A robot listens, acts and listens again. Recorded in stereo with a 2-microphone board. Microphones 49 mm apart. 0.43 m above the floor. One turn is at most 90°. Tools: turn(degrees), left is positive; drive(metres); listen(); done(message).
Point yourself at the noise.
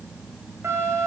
turn(degrees=-65)
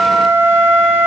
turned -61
turn(degrees=-50)
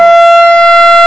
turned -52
done("Found it: a flute, straight ahead.")